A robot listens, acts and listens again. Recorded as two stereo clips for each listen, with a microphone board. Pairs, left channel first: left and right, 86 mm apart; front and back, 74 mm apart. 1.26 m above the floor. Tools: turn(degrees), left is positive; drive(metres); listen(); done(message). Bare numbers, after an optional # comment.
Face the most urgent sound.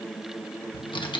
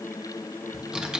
listen()
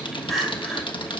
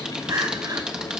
# The crying: straight behind.
turn(180)
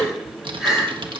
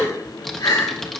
done("Found it: crying, straight ahead, over 4 m away.")